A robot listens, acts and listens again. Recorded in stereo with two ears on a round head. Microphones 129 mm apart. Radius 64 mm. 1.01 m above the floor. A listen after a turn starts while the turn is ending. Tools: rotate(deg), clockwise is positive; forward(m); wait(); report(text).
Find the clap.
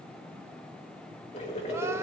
wait()
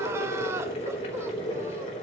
wait()
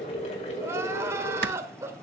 rotate(90)
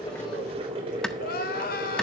report("Facing the clap.")